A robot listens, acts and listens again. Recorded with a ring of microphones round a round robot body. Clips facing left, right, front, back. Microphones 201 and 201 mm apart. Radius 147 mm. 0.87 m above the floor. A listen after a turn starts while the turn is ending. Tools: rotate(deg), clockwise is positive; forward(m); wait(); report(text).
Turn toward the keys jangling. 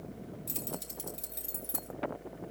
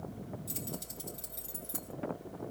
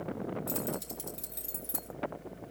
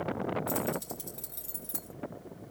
rotate(-65)
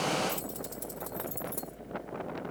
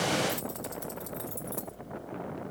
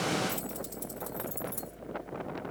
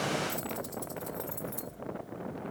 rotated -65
rotate(-25)
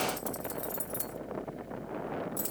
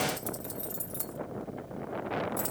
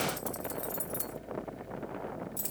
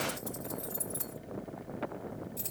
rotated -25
rotate(-20)
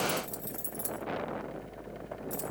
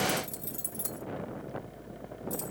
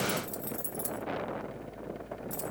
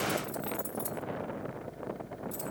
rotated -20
report("Facing the keys jangling.")